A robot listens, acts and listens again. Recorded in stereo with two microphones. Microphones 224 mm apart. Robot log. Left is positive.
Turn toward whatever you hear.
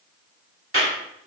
note: The clap: about 65° right or 115° right.
cmd yaw -65
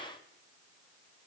cmd idle
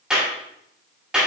end: Found it: a clap, straight ahead, 2 to 4 m away.